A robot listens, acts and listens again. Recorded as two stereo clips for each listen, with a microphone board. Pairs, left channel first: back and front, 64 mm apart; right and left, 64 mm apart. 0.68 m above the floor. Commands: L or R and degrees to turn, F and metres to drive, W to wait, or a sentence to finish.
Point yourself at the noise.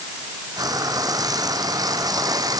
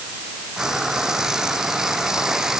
L10
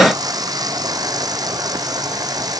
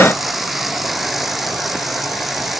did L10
Found it: frying, straight ahead.